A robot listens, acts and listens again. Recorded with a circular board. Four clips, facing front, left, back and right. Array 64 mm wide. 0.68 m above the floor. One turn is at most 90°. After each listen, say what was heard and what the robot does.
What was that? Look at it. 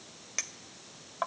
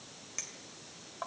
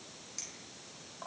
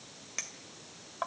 The clink: 20° right. Turn 20° right.
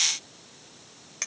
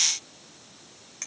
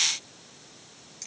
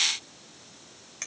The clink is now 10° right. Turn 10° right.
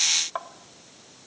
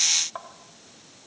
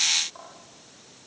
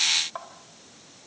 Found it: a clink, straight ahead.